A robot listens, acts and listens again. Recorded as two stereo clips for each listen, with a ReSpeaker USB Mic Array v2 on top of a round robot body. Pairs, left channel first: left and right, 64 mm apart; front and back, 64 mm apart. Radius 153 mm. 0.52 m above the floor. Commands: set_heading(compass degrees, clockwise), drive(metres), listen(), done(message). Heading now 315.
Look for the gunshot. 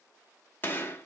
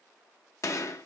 set_heading(280)
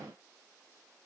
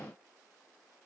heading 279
done("Facing where the gunshot came from. I can't hear it now.")